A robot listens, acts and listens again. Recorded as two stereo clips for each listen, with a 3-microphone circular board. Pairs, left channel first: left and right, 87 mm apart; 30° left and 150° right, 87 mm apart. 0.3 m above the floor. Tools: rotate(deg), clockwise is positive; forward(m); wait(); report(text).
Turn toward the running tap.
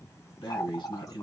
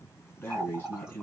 rotate(-130)
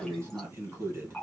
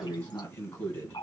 report("Facing the running tap, 1 to 2 m away.")